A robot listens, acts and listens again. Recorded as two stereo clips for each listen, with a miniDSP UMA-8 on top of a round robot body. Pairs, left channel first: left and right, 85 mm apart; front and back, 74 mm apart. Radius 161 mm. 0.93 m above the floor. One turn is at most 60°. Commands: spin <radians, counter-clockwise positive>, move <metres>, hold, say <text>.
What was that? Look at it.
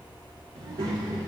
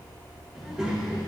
spin -1.05
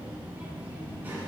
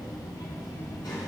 spin -0.44
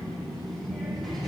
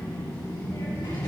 say Found it: a child speaking, straight ahead, 2 to 4 m away.